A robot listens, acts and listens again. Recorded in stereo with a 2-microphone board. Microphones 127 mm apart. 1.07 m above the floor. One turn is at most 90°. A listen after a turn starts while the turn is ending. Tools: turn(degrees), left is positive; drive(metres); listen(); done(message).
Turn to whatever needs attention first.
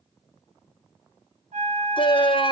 turn(degrees=40)
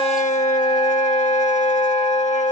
turn(degrees=90)
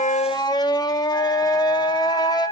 turn(degrees=35)
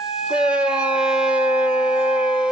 done("Found it: a shout, straight ahead, under 1 m away.")